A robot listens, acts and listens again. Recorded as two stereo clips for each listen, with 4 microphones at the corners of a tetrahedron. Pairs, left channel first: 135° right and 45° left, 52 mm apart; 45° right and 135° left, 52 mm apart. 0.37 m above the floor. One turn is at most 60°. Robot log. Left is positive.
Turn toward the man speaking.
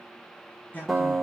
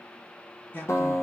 note: The man speaking: 90° right.
cmd yaw -60
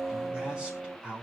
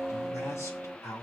note: The man speaking is now 25° right.
cmd yaw -25
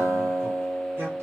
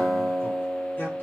cmd idle
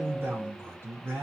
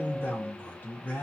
end: Facing the man speaking, over 4 m away.